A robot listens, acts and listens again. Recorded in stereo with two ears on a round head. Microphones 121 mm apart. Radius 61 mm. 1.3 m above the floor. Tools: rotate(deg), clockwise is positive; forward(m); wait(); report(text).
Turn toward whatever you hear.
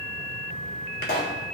rotate(-75)
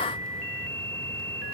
wait()
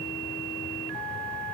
report("I heard a pop, but can't make it out now. It was about straight ahead or 30° left.")